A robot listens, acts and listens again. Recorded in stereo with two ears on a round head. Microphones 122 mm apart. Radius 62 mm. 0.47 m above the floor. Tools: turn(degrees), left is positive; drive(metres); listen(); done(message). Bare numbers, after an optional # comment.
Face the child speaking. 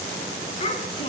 # The child speaking: about 45° left or 135° left.
turn(45)
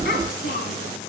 # So it is at 105° left.
turn(105)
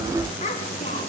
# The child speaking is now 45° left.
turn(45)
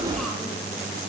listen()
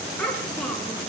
done("Found it: a child speaking, straight ahead.")